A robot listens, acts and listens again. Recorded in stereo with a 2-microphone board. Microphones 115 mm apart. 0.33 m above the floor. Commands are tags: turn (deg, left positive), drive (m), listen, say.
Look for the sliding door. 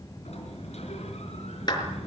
<turn deg="70"/>
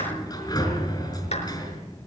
<turn deg="35"/>
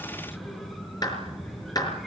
<say>Found it: a sliding door, straight ahead.</say>